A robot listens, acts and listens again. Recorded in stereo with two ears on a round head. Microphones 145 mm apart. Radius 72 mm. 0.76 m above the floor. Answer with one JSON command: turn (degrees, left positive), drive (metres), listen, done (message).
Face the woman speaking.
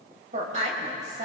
{"turn": -45}
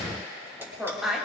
{"done": "Found it: a woman speaking, straight ahead, 2 to 4 m away."}